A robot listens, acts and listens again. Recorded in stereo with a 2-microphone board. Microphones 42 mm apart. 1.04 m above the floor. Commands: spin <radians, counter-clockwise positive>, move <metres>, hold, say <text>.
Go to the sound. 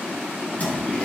spin 0.61
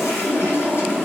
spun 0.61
spin 1.92
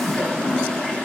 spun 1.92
spin 0.35
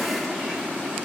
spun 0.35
hold
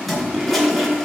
move 1.0
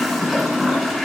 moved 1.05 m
move 1.0
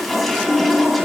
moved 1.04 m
move 1.0
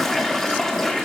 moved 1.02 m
spin 0.17
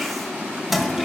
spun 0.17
move 1.0
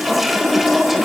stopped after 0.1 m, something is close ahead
say I am next to the toilet flushing.